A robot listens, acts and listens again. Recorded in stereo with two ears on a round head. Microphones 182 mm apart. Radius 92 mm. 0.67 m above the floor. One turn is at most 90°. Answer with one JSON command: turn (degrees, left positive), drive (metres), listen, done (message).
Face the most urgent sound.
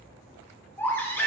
{"turn": 30}
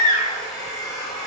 {"turn": 90}
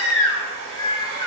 {"turn": 85}
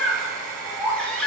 {"done": "Facing the baby crying."}